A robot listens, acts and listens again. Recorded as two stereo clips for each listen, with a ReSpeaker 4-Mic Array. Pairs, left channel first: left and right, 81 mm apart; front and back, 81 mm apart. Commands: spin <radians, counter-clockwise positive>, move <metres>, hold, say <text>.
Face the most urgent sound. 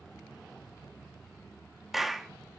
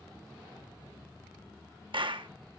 hold
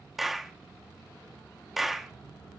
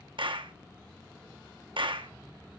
hold
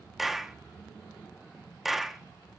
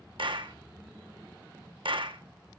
say I can't make out anything urgent to turn to.